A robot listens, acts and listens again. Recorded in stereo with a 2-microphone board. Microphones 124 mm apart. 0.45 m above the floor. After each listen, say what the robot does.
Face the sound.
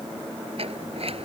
Turn 50° right.
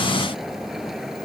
Found it: a sliding door, straight ahead.